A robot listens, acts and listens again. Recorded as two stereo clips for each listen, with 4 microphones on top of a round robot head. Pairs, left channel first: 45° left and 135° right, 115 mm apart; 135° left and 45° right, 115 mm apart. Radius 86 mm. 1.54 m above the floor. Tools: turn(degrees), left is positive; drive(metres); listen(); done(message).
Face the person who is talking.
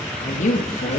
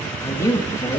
turn(degrees=65)
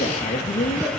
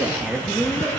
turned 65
turn(degrees=30)
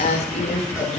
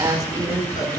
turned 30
turn(degrees=15)
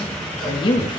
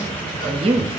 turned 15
done("Facing the woman speaking.")